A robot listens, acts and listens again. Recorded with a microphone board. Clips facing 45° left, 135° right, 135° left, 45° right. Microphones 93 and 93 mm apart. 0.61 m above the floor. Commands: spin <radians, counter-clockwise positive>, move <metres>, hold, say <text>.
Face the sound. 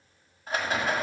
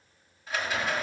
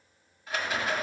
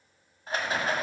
say Facing the rattle.